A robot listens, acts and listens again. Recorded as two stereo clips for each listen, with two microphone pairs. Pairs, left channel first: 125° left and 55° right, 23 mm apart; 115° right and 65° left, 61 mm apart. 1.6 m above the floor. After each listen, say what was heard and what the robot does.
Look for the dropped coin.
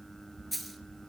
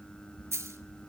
The dropped coin: 30° left. Turn 30° left.
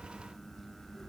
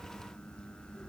Facing where the dropped coin came from. I can't hear it now.